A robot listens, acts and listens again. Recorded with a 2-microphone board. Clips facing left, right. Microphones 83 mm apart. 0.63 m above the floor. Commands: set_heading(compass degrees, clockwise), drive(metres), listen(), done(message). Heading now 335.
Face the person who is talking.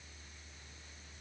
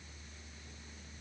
listen()
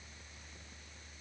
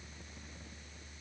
listen()
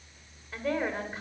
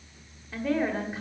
set_heading(305)
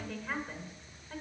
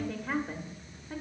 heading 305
set_heading(335)
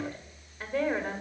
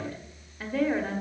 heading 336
done("Facing the woman speaking.")